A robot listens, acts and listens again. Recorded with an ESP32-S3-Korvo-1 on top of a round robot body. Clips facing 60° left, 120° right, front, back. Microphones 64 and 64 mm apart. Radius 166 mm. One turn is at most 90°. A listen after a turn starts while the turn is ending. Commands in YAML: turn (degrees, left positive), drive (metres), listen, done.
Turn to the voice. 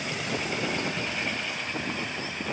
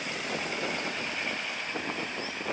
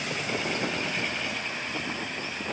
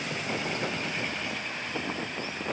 listen: true
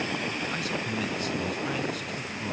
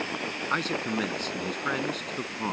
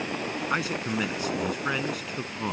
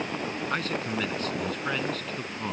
turn: -75
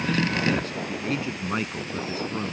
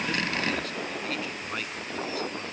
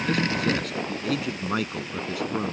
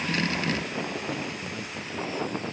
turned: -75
done: "Facing the man speaking."